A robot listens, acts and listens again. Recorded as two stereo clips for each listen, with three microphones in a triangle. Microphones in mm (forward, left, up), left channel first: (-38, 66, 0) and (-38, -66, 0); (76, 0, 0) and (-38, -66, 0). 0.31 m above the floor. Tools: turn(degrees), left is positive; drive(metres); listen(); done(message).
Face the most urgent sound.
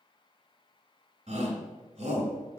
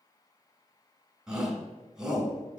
turn(degrees=-65)
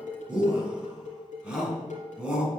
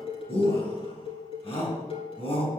turn(degrees=-10)
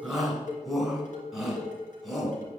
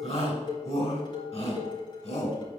done("Found it: a shout, straight ahead.")